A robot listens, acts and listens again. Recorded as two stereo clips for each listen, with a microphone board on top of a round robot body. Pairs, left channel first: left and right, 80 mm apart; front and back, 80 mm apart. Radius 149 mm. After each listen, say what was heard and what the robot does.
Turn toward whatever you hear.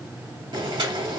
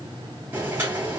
The boiling: 115° right. Turn 115° right.
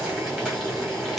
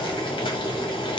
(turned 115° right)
Found it: boiling, straight ahead, 1 to 2 m away.